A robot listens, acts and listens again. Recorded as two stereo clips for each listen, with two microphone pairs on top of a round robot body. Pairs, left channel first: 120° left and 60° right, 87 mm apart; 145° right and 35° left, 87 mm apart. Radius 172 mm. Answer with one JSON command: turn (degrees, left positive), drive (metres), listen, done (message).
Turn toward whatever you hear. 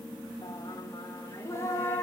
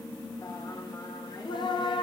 {"turn": -175}
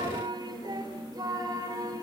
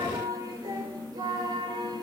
{"done": "Found it: singing, straight ahead."}